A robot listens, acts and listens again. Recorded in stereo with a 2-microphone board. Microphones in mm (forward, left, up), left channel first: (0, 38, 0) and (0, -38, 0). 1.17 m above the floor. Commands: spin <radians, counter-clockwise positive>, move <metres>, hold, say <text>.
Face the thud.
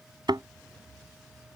spin -1.22
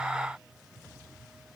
hold
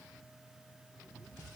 say I heard a thud, but can't make it out now. It was about straight ahead or 40° right.